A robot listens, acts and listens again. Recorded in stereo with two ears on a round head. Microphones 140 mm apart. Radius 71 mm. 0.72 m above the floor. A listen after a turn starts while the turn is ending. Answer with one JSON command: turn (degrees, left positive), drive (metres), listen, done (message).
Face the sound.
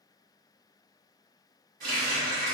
{"turn": -55}
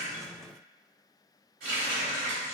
{"turn": -70}
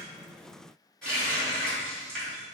{"done": "Facing the running tap, 1 to 2 m away."}